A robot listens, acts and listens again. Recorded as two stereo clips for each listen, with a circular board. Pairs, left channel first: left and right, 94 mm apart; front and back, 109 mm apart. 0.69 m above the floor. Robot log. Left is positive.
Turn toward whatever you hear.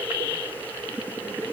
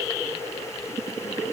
cmd idle
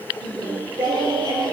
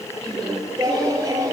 note: The singing: 130° right.
cmd yaw -130
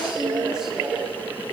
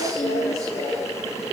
end: Found it: singing, straight ahead, over 4 m away.